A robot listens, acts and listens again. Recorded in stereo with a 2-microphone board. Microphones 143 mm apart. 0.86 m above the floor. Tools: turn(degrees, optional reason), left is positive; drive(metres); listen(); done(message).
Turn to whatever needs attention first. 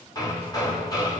listen()
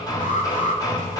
turn(degrees=65, reason="The alarm: about 65° left or 115° left.")
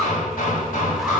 listen()
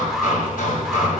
listen()
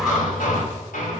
done("I heard an alarm, but can't make it out now. It was about straight ahead or 50° left.")